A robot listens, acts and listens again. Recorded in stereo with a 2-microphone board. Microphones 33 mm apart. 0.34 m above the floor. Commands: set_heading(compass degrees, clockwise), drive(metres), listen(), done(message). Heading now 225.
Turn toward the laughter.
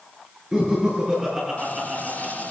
set_heading(250)
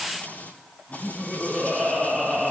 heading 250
done("Facing the laughter.")